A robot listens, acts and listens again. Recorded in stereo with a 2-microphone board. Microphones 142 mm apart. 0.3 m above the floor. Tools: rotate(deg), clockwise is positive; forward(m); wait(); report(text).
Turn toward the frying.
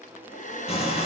rotate(-45)
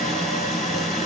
report("Facing the frying, over 4 m away.")